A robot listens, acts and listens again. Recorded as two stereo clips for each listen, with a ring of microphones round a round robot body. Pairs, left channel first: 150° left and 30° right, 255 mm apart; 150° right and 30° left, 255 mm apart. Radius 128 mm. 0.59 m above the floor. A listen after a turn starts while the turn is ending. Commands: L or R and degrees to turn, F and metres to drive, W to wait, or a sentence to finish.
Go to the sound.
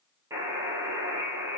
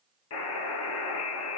R110
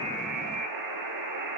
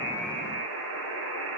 R15
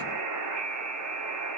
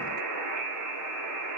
F1.0
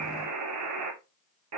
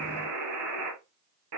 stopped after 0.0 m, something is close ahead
Something is in my way. I am facing the buzzer but have not reached it.